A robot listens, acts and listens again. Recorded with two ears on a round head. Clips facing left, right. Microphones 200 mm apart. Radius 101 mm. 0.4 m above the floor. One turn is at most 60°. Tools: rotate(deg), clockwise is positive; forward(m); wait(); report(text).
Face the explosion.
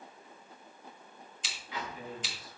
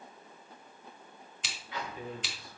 rotate(-60)
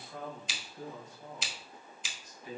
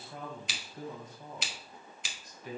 rotate(-30)
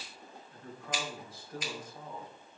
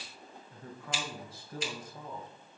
report("Facing where the explosion came from. I can't hear it now.")